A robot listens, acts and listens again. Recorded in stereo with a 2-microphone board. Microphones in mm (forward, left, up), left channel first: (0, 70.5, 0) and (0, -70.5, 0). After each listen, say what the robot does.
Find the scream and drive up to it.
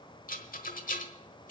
Keep listening.
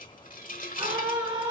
Turn 35° right.
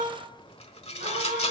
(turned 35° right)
Turn 110° right.
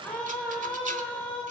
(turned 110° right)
Turn 10° left.
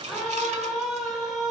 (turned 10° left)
Drive 1.0 m forward.
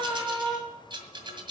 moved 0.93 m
Drive 1.0 m forward.
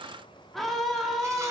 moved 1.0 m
Drive 1.0 m forward.
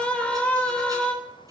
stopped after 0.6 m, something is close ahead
Turn 10° left.
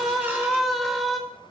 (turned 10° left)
Arrived at the scream, straight ahead.